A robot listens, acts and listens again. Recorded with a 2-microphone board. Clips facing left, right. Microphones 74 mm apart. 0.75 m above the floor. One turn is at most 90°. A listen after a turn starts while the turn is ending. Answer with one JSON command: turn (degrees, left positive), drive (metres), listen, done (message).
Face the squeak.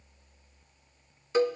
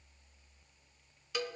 {"listen": true}
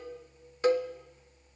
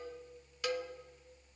{"listen": true}
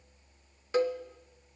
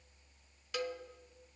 {"done": "I can't make out a squeak to turn to."}